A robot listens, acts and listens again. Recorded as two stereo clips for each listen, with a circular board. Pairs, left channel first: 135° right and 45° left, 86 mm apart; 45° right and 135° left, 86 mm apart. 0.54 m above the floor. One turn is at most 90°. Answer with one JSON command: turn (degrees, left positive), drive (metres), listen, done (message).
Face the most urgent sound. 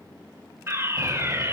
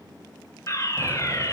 {"done": "Facing the fire alarm."}